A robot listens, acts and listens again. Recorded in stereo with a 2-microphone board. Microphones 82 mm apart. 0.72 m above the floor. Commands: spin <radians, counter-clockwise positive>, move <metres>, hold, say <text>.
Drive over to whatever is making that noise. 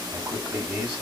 spin -0.35
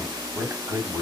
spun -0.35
spin -2.36
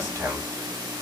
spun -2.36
spin -0.61
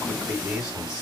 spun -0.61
spin -0.17
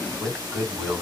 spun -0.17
move 1.0
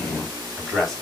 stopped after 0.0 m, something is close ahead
say Blocked. The man speaking is further on, straight ahead.